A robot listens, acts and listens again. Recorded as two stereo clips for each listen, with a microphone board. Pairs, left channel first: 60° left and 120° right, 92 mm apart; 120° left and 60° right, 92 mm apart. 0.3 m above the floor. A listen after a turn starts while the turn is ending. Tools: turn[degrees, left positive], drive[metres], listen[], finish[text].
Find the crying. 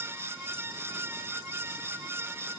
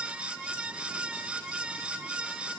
Action: listen[]
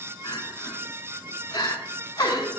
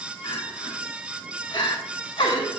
Thought: The crying: 100° left.
Action: turn[100]
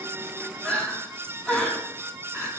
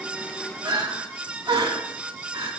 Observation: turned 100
Thought: The crying is now 20° right.
Action: turn[-20]
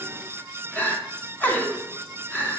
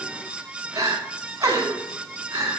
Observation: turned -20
Thought: The crying is now 10° right.
Action: turn[-10]
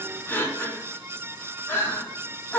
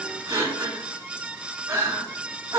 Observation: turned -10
Action: finish[Facing the crying, 1 to 2 m away.]